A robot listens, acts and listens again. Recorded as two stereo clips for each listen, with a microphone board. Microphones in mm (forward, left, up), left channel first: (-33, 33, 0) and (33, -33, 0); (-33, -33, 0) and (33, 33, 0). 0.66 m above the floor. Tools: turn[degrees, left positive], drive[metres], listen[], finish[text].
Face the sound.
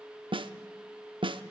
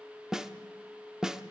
Thought: The snare drum: 40° right.
Action: turn[-40]
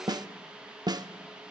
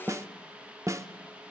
Thought: The snare drum is now 10° right.
Action: turn[-10]
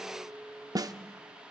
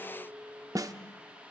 Action: finish[Found it: a snare drum, straight ahead, under 1 m away.]